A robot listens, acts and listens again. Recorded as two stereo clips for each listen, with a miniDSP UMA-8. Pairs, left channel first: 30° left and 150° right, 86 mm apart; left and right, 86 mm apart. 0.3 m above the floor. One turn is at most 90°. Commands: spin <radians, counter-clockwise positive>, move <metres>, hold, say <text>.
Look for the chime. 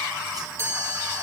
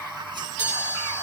spin 1.57
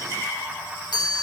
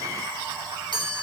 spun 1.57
spin 1.13
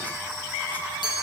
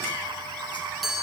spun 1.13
say Found it: a chime, straight ahead, over 4 m away.